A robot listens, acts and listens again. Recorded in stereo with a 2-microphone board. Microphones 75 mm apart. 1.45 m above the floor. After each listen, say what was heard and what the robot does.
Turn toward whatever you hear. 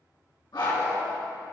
The dog barking: about 75° left or 105° left. Turn 75° left.
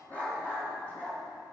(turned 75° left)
So it is at 25° left. Turn 25° left.
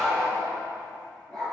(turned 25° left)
The dog barking is now 10° left. Turn 10° left.
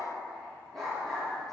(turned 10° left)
Found it: a dog barking, straight ahead.